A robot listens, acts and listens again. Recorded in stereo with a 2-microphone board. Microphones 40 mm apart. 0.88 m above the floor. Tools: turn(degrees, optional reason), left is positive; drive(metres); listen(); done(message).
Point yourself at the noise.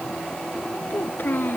turn(degrees=55, reason="The child speaking: about 55° left or 125° left.")
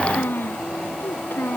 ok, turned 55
turn(degrees=75, reason="So it is at 75° left.")
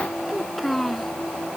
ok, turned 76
done("Found it: a child speaking, straight ahead.")